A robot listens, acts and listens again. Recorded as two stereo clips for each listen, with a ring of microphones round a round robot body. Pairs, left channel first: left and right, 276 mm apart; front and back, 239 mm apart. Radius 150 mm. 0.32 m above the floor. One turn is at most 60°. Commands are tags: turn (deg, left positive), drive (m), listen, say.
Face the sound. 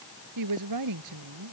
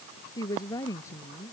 <turn deg="-60"/>
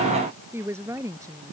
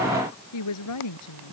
<turn deg="-10"/>
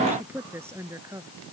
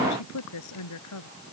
<turn deg="-10"/>
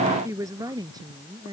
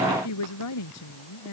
<turn deg="-15"/>
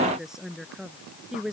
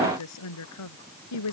<say>Found it: a woman speaking, straight ahead.</say>